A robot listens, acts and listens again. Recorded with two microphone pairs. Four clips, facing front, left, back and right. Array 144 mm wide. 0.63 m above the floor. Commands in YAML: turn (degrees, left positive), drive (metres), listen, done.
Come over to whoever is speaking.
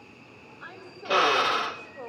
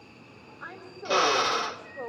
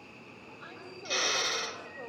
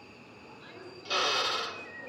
turn: 80
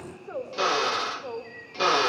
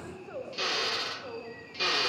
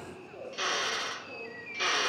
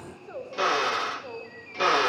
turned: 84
drive: 1.0
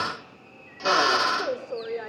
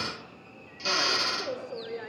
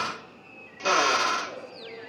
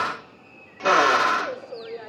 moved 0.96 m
drive: 1.0
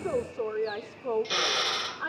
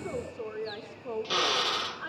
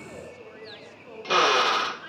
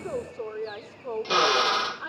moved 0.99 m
drive: 1.0
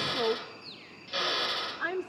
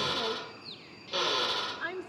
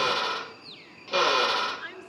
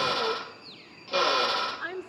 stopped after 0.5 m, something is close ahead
done: "Arrived at the woman speaking, straight ahead."